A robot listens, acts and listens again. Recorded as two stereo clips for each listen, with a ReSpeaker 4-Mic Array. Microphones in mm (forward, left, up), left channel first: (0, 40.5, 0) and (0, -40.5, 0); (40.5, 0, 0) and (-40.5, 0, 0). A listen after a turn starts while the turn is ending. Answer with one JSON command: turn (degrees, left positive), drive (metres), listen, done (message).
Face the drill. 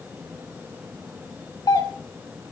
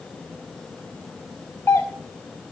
{"listen": true}
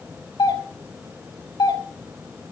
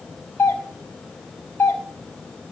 {"listen": true}
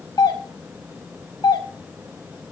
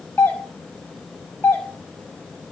{"done": "I can't make out a drill, only a doorbell."}